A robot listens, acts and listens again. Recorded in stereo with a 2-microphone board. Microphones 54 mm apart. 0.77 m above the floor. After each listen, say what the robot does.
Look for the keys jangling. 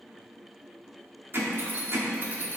Turn 40° right.
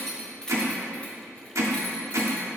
Turn 15° left.
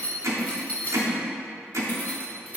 Turn 35° left.
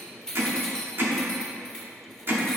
Turn 10° left.
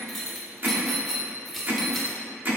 Facing the keys jangling, 1 to 2 m away.